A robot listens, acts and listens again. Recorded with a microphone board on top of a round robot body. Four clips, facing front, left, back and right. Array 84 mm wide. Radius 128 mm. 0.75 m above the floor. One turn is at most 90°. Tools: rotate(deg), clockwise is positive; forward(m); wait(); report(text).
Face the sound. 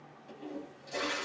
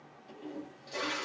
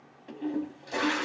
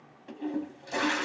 rotate(90)
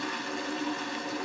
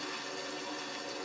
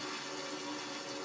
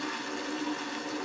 rotate(35)
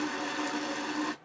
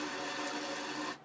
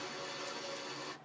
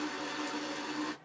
report("Facing the toilet flushing, under 1 m away.")